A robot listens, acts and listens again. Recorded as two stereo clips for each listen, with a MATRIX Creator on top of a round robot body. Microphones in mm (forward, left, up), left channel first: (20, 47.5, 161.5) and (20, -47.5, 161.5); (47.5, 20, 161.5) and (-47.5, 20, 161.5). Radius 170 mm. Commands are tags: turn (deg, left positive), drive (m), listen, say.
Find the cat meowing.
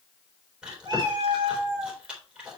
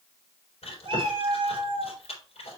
<turn deg="-145"/>
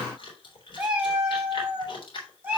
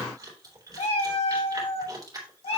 <turn deg="-15"/>
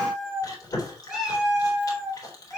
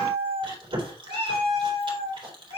<say>Facing the cat meowing.</say>